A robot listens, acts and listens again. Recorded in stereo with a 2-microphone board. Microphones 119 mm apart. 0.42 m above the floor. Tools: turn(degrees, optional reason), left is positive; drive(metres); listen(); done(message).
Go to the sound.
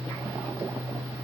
listen()
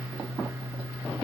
listen()
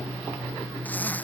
turn(degrees=30)
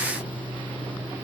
listen()
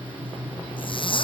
turn(degrees=135, reason="So it is at 135° left.")
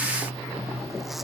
listen()
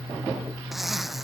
drive(metres=1.0)
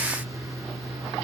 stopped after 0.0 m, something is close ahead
listen()
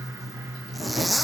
done("Something is in my way. I am facing the zipper but have not reached it.")